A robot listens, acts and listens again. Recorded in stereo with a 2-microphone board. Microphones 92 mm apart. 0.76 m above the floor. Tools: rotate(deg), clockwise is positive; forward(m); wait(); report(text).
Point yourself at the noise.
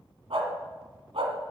rotate(75)
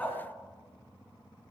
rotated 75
rotate(-15)
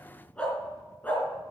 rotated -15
rotate(-20)
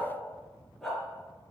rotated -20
report("Found it: a dog barking, straight ahead, over 4 m away.")